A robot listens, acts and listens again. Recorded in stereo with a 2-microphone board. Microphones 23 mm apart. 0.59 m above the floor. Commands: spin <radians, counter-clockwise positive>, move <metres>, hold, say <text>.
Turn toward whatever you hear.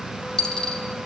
spin 0.44
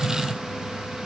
hold
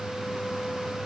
say I heard a dropped coin, but can't make it out now. It was about straight ahead or 130° left.